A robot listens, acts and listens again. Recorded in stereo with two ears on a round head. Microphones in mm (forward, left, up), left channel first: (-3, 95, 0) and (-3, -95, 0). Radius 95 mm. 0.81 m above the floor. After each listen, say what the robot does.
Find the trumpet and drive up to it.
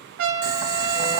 Turn 65° right.
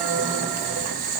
Keep listening.
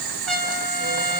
Drive 1.0 m forward.
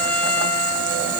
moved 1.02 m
Drive 1.0 m forward.
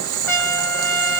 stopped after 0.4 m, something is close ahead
Turn 10° left.
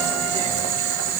Keep listening.
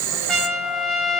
Arrived at the trumpet, straight ahead.